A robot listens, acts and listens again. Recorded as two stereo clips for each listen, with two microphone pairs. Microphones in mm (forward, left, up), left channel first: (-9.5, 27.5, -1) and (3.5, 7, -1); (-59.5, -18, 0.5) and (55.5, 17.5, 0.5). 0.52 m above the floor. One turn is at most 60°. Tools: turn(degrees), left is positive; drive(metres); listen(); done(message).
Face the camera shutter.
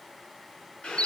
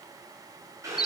listen()
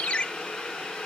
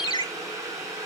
listen()
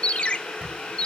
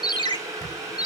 turn(degrees=-60)
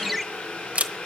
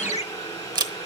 turn(degrees=-35)
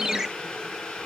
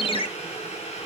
listen()
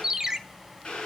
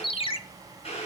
listen()
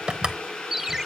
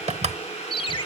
done("Facing the camera shutter.")